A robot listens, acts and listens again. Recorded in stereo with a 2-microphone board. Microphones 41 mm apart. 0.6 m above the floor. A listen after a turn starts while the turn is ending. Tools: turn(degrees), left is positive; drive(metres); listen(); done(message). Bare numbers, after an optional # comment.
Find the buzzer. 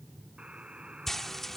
# The buzzer: about 30° right or 150° right.
turn(-30)
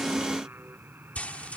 # So it is at 120° right.
turn(-120)
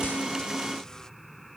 listen()
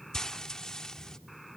listen()
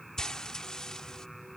done("I heard a buzzer from this way, but can't make it out now.")